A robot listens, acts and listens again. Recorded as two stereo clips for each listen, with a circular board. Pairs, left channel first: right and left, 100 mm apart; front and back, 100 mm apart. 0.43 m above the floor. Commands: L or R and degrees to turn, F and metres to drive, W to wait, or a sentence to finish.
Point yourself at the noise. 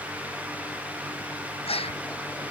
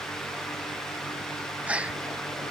R105
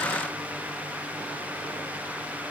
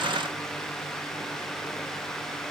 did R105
I heard a gasp from this way, but can't make it out now.